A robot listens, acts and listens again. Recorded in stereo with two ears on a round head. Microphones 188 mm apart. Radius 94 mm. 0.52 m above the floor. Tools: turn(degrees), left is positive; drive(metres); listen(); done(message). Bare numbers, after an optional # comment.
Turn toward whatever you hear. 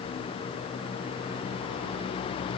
listen()
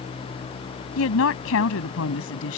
# The woman speaking: about 70° left or 110° left.
turn(70)
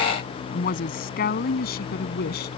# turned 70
# So it is at 50° left.
turn(50)
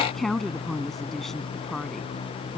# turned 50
done("Found it: a woman speaking, straight ahead.")